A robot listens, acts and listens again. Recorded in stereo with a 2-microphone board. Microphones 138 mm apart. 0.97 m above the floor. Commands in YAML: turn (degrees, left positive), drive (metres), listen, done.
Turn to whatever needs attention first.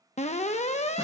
turn: 55
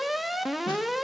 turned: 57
done: "Facing the alarm, under 1 m away."